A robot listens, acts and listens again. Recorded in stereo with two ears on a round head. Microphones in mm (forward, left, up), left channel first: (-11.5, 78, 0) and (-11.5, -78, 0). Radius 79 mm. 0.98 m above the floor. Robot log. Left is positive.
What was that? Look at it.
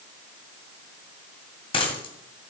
note: The dropped coin: about 35° left or 145° left.
cmd yaw +35
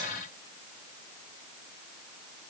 cmd idle
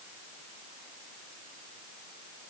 end: I heard a dropped coin, but can't make it out now. It was about straight ahead or 110° left.